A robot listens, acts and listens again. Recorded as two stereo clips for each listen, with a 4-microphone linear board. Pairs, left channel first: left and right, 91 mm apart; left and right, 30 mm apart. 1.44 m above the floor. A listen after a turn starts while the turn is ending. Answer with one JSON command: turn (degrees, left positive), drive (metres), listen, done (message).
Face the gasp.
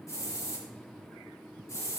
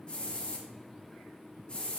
{"listen": true}
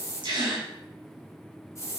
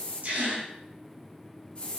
{"turn": -60}
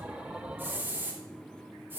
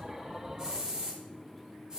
{"listen": true}
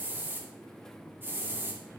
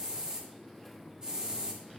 {"done": "I heard a gasp, but can't make it out now. It was about straight ahead or 60° right."}